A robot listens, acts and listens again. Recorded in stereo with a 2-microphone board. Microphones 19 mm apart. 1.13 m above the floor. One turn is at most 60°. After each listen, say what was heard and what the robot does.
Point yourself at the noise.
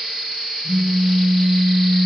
The phone buzzing: about 20° right or 160° right. Turn 20° right.
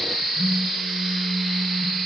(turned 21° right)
So it is at 135° right. Turn 60° right.
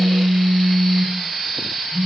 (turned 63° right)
The phone buzzing is now 70° right. Turn 60° right.
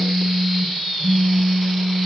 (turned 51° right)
The phone buzzing is now 20° right. Turn 20° right.
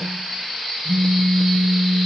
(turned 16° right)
Facing the phone buzzing.